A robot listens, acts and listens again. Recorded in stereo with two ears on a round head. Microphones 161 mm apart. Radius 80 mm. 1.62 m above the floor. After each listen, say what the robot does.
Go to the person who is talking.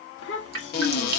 Turn 75° left.
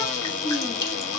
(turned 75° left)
Keep listening.
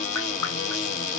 Keep listening.
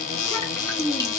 Turn 10° left.
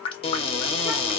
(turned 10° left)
Keep listening.
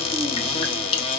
Keep listening.
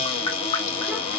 I heard a child speaking from this way, but can't make it out now. I did not reach it.